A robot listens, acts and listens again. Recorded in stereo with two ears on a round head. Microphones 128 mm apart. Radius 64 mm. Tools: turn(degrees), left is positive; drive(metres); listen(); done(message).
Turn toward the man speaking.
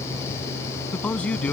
turn(degrees=30)
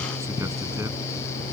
listen()
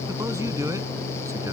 listen()
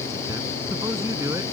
turn(degrees=-20)
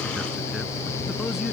listen()
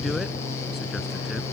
listen()
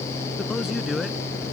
done("Found it: a man speaking, straight ahead.")